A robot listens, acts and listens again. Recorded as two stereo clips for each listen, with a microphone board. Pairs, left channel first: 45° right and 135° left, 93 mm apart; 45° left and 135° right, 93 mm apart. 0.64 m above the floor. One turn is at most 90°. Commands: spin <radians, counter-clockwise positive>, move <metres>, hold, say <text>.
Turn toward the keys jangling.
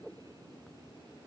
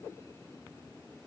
hold
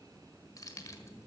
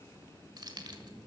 spin -1.57
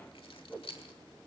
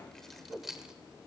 spin -0.87
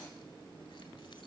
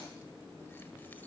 hold
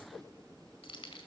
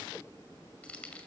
spin -0.52
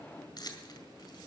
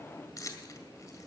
say Found it: keys jangling, straight ahead.